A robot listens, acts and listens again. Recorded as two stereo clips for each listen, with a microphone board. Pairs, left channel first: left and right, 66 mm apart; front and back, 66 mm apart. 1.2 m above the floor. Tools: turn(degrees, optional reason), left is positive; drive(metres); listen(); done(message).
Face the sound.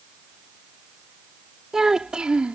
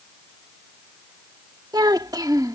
turn(degrees=-160, reason="The child speaking: 160° right.")
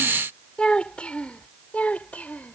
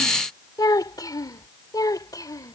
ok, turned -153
turn(degrees=20, reason="The child speaking is now 20° left.")
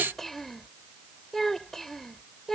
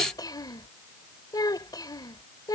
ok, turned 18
done("Found it: a child speaking, straight ahead.")